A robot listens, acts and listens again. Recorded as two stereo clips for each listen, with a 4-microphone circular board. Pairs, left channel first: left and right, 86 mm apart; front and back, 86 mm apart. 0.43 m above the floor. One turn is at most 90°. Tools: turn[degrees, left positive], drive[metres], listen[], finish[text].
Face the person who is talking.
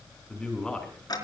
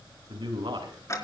Thought: The man speaking: 170° left.
Action: turn[90]
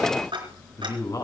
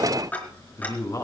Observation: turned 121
Thought: The man speaking is now 45° left.
Action: turn[45]
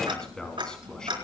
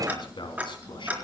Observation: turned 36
Thought: The man speaking is now 10° left.
Action: turn[10]
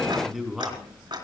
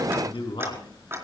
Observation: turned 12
Action: finish[Facing the man speaking, 2 to 4 m away.]